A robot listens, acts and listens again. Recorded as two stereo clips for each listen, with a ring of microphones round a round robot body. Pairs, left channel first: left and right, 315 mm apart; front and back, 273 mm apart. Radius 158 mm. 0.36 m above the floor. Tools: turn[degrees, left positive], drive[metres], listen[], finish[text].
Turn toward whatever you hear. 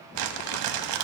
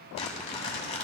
Thought: The crumpling: 70° right.
Action: turn[-70]
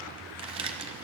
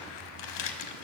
Thought: The crumpling is now 15° right.
Action: turn[-15]
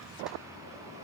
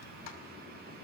Action: listen[]
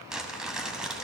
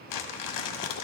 Action: finish[Facing the crumpling.]